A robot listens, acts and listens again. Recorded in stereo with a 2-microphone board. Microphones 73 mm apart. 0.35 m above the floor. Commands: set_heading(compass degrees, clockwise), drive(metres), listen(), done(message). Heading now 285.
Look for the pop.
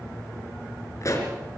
set_heading(240)
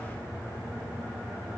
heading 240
listen()
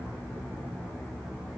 done("I heard a pop, but can't make it out now. It was about straight ahead or 90° left.")